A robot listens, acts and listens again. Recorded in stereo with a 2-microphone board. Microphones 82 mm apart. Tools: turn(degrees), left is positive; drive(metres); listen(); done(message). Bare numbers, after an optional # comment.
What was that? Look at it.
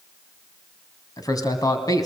# The man speaking: about 45° left or 135° left.
turn(45)
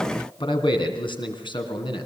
# So it is at 75° left.
turn(75)
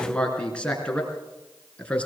# The man speaking is now 15° left.
turn(15)
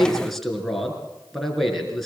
done("Found it: a man speaking, straight ahead.")